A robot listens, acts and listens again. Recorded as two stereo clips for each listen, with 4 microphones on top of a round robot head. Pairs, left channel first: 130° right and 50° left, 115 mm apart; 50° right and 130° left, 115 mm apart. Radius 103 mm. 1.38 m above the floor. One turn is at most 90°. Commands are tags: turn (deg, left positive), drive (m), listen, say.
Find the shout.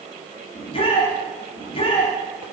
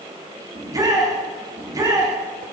<turn deg="-90"/>
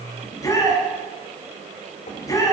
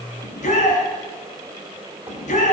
<turn deg="-65"/>
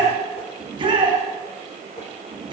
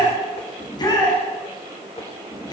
<say>Facing the shout.</say>